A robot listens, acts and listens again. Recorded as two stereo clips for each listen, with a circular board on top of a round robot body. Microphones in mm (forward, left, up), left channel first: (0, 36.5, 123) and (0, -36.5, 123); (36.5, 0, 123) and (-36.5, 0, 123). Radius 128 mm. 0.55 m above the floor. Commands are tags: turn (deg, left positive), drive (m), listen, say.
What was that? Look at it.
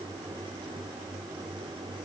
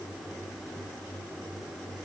<listen/>
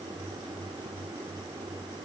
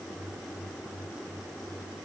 <listen/>
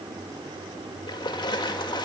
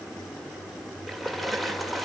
<turn deg="90"/>
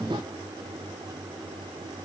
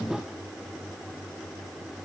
<say>I heard a splash from this way, but can't make it out now.</say>